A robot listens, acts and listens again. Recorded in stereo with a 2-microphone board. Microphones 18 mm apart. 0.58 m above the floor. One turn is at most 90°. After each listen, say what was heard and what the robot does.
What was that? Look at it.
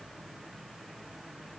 Keep listening.
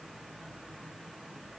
Keep listening.
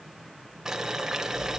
The boiling: about 25° right or 155° right. Turn 25° right.
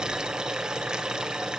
So it is at 130° right. Turn 90° right.
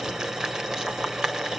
The boiling is now 45° right. Turn 45° right.
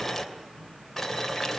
The boiling is now 10° left. Turn 10° left.
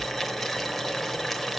Facing the boiling, 2 to 4 m away.